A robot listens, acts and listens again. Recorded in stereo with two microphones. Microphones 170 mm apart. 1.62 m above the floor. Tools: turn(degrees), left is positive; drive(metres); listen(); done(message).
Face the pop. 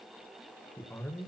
listen()
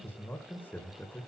listen()
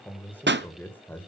turn(degrees=-90)
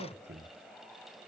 done("Facing where the pop came from. I can't hear it now.")